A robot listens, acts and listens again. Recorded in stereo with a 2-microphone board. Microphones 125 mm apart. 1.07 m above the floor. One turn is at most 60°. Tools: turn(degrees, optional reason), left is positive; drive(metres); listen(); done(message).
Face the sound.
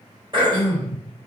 turn(degrees=-40, reason="The throat clearing: about 40° right or 140° right.")
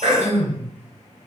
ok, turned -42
turn(degrees=-60, reason="So it is at 95° right.")
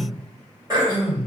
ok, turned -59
turn(degrees=-35, reason="The throat clearing is now 35° right.")
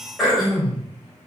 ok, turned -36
done("Facing the throat clearing, 1 to 2 m away.")